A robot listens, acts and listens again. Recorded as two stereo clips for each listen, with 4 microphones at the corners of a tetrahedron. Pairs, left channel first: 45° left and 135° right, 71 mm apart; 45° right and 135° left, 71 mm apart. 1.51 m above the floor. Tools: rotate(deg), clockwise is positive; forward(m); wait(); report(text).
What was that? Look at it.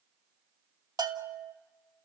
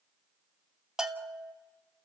rotate(145)
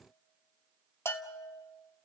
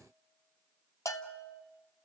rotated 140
report("Found it: a bell, straight ahead.")